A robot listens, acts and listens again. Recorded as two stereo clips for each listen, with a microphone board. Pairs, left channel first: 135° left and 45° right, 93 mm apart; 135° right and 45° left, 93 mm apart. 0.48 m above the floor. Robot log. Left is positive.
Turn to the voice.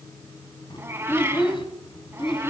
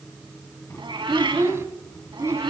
note: The child speaking: 105° left.
cmd yaw +105
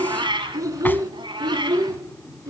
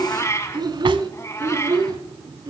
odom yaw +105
end: Found it: a child speaking, straight ahead.